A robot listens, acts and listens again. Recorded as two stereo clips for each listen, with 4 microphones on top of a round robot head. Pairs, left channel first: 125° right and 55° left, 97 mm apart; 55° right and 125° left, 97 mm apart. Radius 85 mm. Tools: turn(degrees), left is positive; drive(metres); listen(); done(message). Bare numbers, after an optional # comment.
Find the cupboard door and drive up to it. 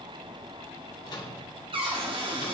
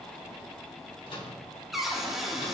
# The cupboard door: 40° left.
turn(40)
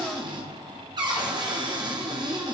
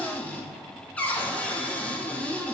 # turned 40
# The cupboard door is now 20° left.
turn(20)
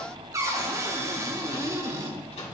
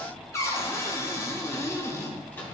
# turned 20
drive(1.0)
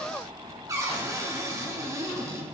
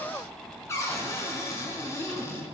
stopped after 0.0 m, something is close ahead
done("Blocked. The cupboard door is further on, straight ahead.")